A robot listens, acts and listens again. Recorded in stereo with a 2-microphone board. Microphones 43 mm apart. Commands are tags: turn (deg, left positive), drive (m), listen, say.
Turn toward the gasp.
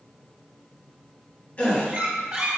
<turn deg="30"/>
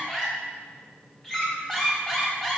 <listen/>
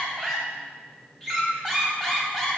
<say>I heard a gasp, but can't make it out now. It was about straight ahead or 120° left.</say>